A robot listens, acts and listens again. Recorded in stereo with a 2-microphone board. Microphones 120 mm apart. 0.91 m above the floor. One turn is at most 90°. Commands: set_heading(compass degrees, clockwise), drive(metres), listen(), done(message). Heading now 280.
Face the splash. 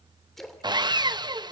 set_heading(250)
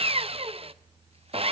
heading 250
listen()
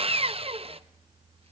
done("I heard a splash, but can't make it out now. It was about 30° right or 150° left.")